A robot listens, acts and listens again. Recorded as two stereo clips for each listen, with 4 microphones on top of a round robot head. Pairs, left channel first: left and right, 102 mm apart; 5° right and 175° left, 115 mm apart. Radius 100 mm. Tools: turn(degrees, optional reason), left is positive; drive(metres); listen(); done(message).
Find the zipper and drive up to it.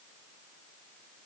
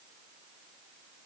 listen()
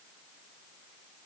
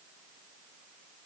listen()
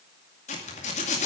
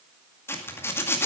turn(degrees=65, reason="The zipper: 65° left.")
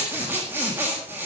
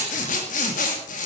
turn(degrees=-15, reason="The zipper is now 15° right.")
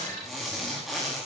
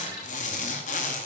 drive(metres=1.0)
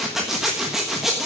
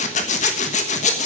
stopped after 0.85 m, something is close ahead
done("I am next to the zipper.")